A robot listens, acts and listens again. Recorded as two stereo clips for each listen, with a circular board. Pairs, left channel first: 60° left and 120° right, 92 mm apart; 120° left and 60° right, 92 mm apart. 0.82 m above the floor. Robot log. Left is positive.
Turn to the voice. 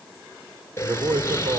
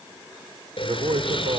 note: The man speaking: 75° right.
cmd yaw -75
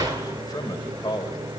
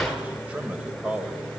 note: The man speaking is now 20° left.
cmd yaw +20
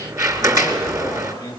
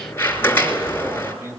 end: Found it: a man speaking, straight ahead.